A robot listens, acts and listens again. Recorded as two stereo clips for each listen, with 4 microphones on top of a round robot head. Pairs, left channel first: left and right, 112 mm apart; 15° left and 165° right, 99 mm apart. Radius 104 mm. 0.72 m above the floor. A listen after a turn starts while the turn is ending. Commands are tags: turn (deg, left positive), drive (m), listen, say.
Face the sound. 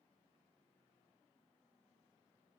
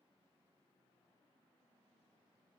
<listen/>
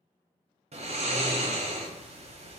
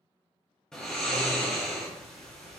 <turn deg="-70"/>
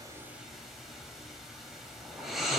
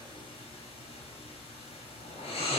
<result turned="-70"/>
<say>Found it: snoring, straight ahead.</say>